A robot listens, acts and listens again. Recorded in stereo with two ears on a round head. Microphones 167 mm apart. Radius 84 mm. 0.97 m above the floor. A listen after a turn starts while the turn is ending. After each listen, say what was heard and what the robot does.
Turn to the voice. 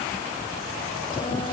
Keep listening.
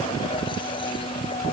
Keep listening.
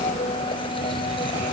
I can't make out anyone speaking to turn to.